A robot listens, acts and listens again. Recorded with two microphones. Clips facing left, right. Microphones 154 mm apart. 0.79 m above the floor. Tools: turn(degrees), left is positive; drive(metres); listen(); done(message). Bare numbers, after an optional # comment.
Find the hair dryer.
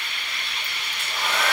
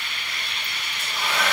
# The hair dryer: about 45° left or 135° left.
turn(45)
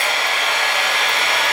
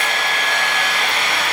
# So it is at 90° left.
turn(90)
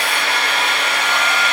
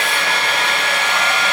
# The hair dryer is now 20° right.
turn(-20)
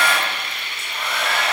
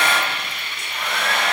done("Facing the hair dryer, under 1 m away.")